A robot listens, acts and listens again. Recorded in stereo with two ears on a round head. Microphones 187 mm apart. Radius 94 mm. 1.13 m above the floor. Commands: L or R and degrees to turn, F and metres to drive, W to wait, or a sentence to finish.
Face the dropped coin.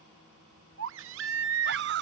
W
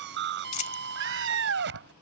L40
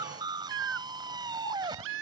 W
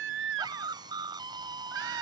I heard a dropped coin, but can't make it out now. It was about straight ahead or 100° left.